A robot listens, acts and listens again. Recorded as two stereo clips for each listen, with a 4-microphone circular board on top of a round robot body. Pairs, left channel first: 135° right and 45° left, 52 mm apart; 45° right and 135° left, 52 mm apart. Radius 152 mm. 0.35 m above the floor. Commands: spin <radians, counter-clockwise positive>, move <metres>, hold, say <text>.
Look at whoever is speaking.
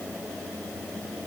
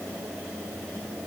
hold
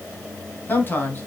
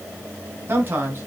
spin 3.05
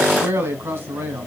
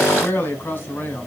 say Facing the man speaking.